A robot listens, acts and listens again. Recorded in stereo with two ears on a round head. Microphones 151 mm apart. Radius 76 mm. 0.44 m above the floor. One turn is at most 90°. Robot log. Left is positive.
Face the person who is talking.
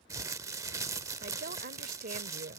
note: The woman speaking: about 55° right or 125° right.
cmd yaw -55
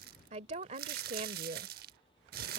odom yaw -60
note: So it is at 50° right.
cmd yaw -50
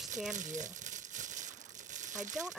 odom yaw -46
end: Facing the woman speaking.